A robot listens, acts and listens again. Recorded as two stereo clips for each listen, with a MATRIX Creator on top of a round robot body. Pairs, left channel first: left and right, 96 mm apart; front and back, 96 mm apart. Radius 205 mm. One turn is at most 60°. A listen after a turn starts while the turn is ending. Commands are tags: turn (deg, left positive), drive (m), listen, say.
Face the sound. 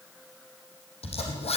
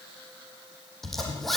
<turn deg="60"/>
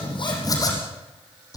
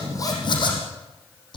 <turn deg="35"/>
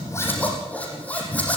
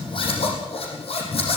<turn deg="15"/>
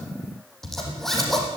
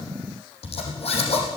<say>Found it: a zipper, straight ahead.</say>